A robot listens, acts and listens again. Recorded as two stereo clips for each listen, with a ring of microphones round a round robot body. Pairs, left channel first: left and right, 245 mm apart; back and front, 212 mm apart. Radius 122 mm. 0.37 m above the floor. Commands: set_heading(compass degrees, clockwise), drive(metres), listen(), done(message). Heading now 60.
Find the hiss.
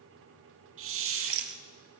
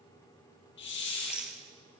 set_heading(190)
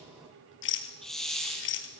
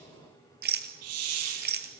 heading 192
done("Found it: a hiss, straight ahead, 2 to 4 m away.")